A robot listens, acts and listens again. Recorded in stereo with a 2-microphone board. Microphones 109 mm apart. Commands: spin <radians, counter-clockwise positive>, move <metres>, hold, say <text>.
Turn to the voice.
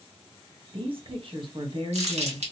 spin -0.96
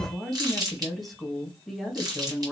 say Found it: a woman speaking, straight ahead.